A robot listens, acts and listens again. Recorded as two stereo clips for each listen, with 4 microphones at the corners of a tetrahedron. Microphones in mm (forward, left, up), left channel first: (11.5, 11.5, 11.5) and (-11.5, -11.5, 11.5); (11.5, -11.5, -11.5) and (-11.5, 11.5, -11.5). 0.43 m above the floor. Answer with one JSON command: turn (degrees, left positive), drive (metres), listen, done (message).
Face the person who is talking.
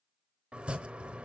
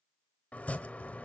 {"listen": true}
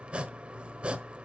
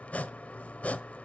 {"listen": true}
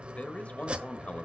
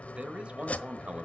{"turn": 85}
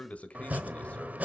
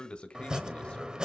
{"done": "Found it: a man speaking, straight ahead."}